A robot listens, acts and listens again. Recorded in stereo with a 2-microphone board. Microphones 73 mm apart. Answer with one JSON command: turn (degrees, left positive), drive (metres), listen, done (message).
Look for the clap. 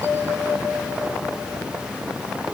{"listen": true}
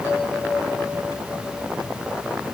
{"listen": true}
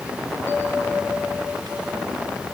{"done": "I can't make out a clap to turn to."}